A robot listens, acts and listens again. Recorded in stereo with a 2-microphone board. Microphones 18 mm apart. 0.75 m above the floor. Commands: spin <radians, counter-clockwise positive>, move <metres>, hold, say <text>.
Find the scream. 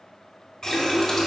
hold
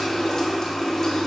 hold
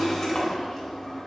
say I can't make out a scream, only a running tap.